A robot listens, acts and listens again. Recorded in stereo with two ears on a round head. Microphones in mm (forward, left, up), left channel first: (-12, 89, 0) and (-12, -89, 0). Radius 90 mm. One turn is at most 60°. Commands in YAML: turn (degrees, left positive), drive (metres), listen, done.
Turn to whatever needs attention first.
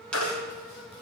turn: 60
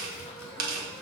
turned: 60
turn: 30
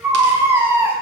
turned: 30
turn: -10
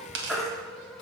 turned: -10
done: "Facing the baby crying."